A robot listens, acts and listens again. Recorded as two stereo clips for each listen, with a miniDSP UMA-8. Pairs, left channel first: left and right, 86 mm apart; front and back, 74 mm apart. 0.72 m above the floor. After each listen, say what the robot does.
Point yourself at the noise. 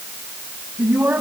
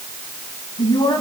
Turn 15° right.
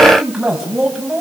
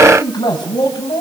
Found it: a man speaking, straight ahead, over 4 m away.